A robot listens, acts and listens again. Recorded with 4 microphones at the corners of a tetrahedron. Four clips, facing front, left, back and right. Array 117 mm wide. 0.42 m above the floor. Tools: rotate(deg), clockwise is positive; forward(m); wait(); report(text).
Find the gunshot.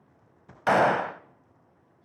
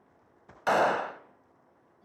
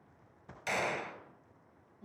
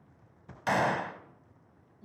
rotate(-20)
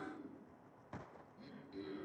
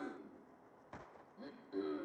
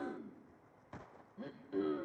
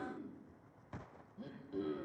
report("Facing where the gunshot came from. I can't hear it now.")